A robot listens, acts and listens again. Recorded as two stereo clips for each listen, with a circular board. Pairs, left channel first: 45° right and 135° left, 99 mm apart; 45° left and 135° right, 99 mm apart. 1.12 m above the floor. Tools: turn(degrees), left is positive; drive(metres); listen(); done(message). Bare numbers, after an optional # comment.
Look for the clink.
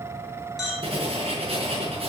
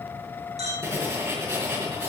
# The clink: 135° right.
turn(-135)
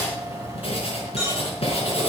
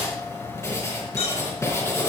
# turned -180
# The clink is now 45° left.
turn(45)
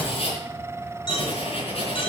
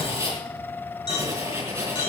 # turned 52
done("Found it: a clink, straight ahead, over 4 m away.")